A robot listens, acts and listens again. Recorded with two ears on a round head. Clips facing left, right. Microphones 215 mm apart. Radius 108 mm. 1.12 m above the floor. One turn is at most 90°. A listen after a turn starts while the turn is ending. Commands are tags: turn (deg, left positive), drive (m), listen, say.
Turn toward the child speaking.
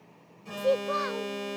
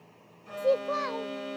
<turn deg="15"/>
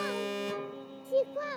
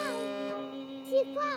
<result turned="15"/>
<turn deg="-30"/>
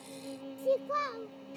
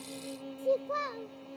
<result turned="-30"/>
<turn deg="15"/>
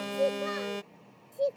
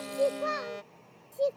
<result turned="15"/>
<say>Facing the child speaking.</say>